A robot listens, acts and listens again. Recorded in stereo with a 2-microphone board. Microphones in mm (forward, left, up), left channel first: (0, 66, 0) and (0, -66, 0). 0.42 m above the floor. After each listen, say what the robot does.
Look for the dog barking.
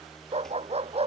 Turn 50° right.
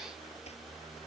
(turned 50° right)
Keep listening.
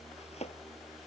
Keep listening.
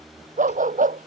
Turn 85° right.
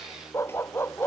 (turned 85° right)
Turn 20° left.
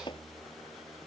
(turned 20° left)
Keep listening.
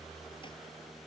Keep listening.
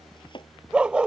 Found it: a dog barking, straight ahead.